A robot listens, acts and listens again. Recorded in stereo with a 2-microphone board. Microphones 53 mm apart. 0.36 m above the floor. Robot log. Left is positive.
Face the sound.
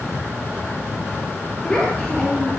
note: The child speaking: about 15° left or 165° left.
cmd yaw +15
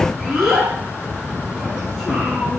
cmd yaw -30
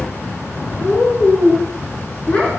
note: So it is at 20° left.
cmd yaw +20
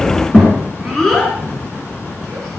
end: Facing the child speaking, 2 to 4 m away.